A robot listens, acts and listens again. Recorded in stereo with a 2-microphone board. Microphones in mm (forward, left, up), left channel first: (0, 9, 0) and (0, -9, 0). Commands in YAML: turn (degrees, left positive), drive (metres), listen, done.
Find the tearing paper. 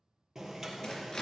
turn: 25
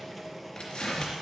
turn: 130
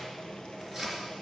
done: "Found it: tearing paper, straight ahead."